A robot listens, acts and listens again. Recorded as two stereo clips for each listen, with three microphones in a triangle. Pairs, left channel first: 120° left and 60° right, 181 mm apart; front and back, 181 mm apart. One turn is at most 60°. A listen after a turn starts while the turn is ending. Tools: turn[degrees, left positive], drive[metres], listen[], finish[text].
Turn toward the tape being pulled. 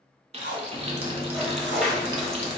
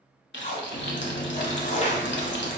Thought: The tape being pulled: 50° right.
Action: turn[-50]
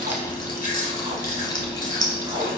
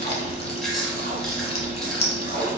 Action: listen[]
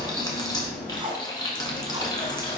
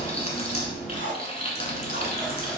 Action: finish[Found it: tape being pulled, straight ahead, under 1 m away.]